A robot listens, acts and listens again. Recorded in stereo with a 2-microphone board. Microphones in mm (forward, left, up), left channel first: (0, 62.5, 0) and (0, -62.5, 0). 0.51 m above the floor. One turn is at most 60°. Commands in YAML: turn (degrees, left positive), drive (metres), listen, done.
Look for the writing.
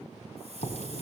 turn: 60
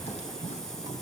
listen: true
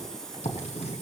turn: 60
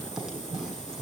done: "Found it: writing, straight ahead, over 4 m away."